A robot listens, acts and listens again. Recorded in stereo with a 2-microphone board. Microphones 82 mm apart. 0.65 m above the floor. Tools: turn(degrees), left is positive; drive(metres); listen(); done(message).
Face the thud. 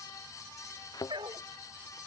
turn(degrees=50)
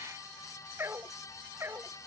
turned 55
listen()
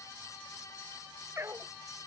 done("I heard a thud, but can't make it out now. It was about 5° right or 75° left.")